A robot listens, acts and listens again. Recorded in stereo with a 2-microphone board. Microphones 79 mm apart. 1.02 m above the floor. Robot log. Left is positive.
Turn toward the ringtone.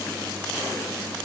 cmd idle
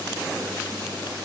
cmd idle
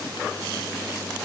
end: I can't make out a ringtone.